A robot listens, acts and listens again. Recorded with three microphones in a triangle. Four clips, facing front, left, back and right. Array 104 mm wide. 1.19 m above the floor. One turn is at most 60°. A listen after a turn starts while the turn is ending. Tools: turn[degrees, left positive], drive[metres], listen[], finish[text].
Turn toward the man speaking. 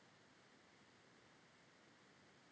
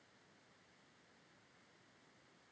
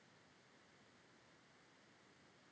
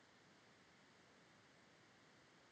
Action: listen[]
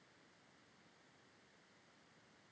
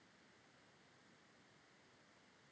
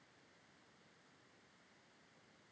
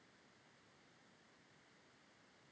Action: listen[]
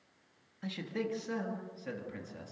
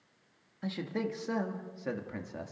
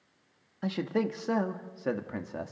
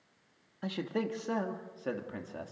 Thought: The man speaking: 170° right.
Action: turn[-60]
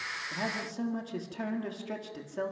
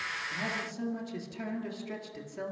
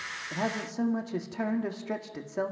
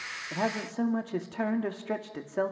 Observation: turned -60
Thought: The man speaking is now 115° right.
Action: turn[-60]
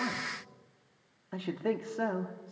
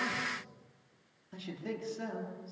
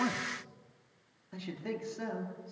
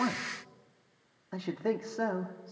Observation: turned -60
Thought: The man speaking is now 50° right.
Action: turn[-50]
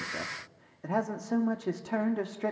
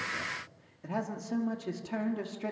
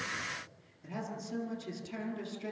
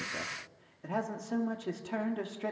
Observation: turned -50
Action: finish[Facing the man speaking.]